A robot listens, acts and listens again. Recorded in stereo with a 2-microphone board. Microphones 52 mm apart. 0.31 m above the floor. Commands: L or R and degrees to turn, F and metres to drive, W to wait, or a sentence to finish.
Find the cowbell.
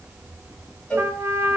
L20
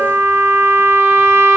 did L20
W
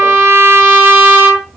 W
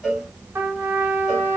Facing the cowbell, 2 to 4 m away.